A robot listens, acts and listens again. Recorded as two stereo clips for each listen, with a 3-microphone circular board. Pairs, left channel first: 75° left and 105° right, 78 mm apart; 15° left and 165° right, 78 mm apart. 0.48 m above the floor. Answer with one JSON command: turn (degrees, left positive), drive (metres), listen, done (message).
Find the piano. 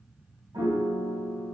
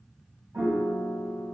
{"turn": -105}
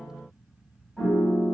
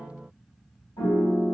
{"done": "Facing the piano, 1 to 2 m away."}